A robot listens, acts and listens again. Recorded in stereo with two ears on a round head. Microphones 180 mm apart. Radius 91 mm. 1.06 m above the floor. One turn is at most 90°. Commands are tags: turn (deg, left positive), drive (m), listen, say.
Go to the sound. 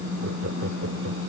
<turn deg="-60"/>
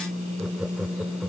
<drive m="1.0"/>
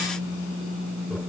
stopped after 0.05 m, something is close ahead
<listen/>
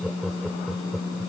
<say>Something is in my way. I am facing the laughter but have not reached it.</say>